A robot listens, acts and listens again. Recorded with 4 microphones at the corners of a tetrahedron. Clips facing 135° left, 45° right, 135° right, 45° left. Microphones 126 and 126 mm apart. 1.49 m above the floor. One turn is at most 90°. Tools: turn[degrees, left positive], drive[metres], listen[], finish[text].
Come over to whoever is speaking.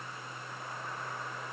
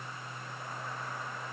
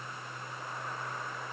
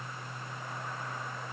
Action: listen[]
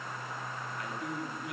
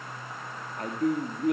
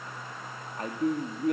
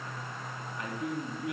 Thought: The man speaking: 90° right.
Action: turn[-90]
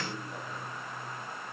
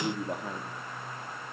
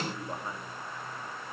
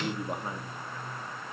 Action: listen[]
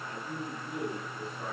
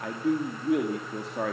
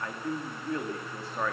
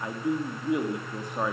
Thought: The man speaking is now 30° right.
Action: turn[-30]
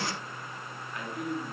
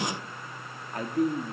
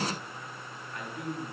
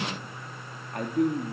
Action: drive[1.0]
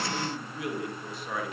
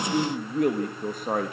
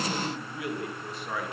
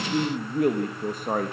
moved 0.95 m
Action: drive[1.0]
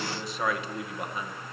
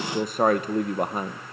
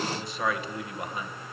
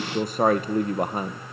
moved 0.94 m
Action: drive[1.0]
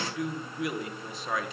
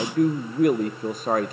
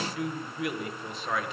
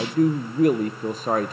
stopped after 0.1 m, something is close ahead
Action: finish[I am next to the man speaking.]